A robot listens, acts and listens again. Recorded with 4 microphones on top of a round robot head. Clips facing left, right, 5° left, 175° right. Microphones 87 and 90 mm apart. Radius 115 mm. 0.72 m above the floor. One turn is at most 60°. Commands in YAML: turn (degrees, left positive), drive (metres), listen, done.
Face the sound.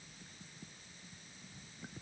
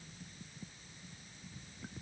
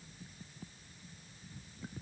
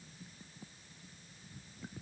listen: true
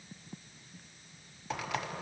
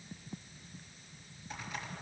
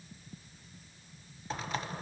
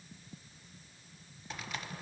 turn: 60
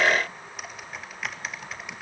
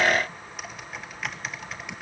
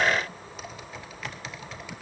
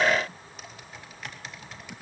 done: "Facing the typing on a keyboard, 1 to 2 m away."